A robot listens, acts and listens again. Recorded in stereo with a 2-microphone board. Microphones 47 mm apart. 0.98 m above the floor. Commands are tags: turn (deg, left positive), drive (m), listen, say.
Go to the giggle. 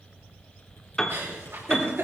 <turn deg="-65"/>
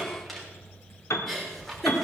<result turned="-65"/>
<drive m="1.0"/>
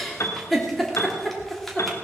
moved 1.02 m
<drive m="1.0"/>
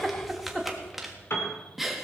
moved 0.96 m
<drive m="1.0"/>
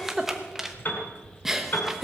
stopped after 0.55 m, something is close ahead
<turn deg="-10"/>
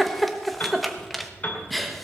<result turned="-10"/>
<say>I am next to the giggle.</say>